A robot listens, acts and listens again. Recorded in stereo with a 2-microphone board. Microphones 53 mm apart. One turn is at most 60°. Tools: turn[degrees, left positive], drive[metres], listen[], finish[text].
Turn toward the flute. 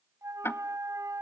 Action: turn[-60]
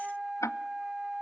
Thought: So it is at 15° right.
Action: turn[-15]
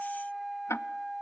Action: finish[Facing the flute, under 1 m away.]